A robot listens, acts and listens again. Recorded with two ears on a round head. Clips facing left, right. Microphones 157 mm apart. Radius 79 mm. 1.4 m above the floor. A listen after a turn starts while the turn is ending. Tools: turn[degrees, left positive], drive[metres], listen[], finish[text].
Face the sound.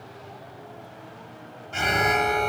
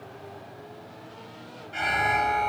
Thought: The alarm: about 50° left or 130° left.
Action: turn[50]
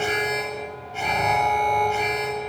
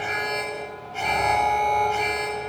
Action: finish[Found it: an alarm, straight ahead, 2 to 4 m away.]